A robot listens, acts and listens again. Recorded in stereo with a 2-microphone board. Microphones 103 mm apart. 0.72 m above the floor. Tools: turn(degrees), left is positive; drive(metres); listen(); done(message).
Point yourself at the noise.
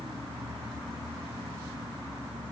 listen()
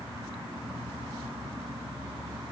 listen()
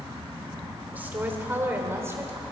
turn(degrees=-25)
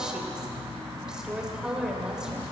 turn(degrees=-30)
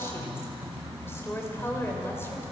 listen()
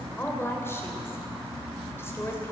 turn(degrees=25)
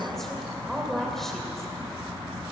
done("Found it: a woman speaking, straight ahead, 2 to 4 m away.")